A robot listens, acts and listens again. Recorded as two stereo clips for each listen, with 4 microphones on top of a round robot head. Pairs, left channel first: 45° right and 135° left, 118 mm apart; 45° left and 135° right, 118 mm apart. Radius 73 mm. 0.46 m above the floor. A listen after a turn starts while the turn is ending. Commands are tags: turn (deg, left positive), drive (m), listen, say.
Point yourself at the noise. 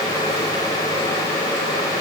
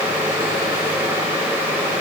<listen/>
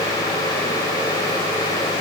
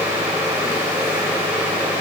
<listen/>
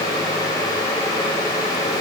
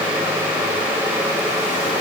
<say>I can't make out anything.</say>